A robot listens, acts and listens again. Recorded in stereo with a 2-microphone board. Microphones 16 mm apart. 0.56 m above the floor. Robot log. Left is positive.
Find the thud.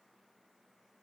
cmd idle
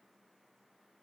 cmd idle
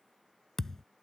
note: The thud: about 20° left or 160° left.
cmd yaw +20
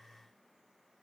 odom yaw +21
cmd idle
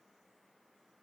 end: I heard a thud, but can't make it out now. It was about straight ahead or 135° left.